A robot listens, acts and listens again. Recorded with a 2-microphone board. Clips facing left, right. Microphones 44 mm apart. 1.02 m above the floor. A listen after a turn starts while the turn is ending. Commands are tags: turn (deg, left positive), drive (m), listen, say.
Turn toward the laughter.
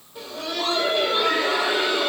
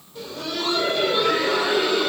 <turn deg="30"/>
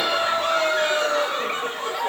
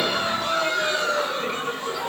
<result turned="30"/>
<turn deg="140"/>
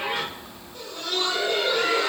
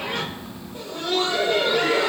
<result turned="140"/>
<turn deg="-20"/>
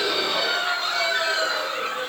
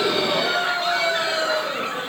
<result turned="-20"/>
<turn deg="-10"/>
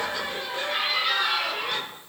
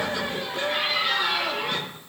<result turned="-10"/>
<say>Found it: laughter, straight ahead.</say>